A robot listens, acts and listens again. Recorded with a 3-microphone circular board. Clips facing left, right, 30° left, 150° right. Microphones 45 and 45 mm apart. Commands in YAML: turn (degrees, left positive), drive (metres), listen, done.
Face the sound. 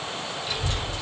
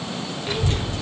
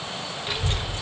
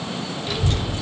turn: -40
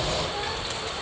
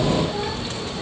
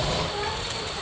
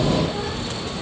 done: "Found it: a child speaking, straight ahead, 1 to 2 m away."